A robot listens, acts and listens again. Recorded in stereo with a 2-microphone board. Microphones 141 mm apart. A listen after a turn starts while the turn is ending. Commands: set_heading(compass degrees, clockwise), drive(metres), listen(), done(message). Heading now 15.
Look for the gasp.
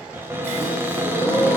set_heading(0)
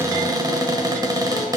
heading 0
listen()
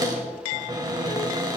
done("I heard a gasp, but can't make it out now. It was about straight ahead or 150° left.")